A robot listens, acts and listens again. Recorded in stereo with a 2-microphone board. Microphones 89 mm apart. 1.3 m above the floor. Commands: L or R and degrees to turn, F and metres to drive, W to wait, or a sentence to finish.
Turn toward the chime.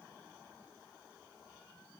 W
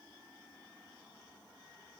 W
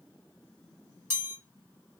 R25
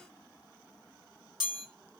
Facing the chime, 1 to 2 m away.